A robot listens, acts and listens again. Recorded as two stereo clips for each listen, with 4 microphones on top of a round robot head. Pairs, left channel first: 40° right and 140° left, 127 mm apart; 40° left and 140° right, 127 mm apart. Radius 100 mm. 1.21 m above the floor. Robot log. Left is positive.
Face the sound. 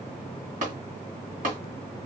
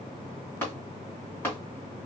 note: The tapping: 115° left.
cmd yaw +115
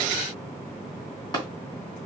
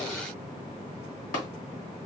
note: The tapping is now 20° left.
cmd yaw +20
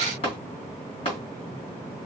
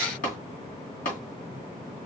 note: The tapping is now 10° left.
cmd yaw +10
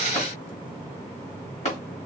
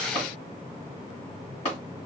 end: Found it: tapping, straight ahead.